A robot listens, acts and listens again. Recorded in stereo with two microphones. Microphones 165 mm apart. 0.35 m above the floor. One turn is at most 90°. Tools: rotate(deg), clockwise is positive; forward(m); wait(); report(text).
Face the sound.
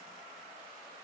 wait()
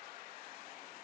wait()
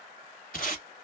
rotate(-60)
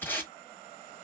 rotate(-15)
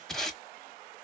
report("Facing the tape being pulled, 1 to 2 m away.")